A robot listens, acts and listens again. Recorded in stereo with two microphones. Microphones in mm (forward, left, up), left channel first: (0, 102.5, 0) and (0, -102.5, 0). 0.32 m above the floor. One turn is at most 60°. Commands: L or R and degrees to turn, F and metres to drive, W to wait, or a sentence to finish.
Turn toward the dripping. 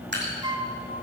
R60
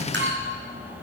W
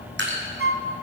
R60
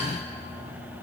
W
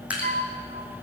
Facing the dripping.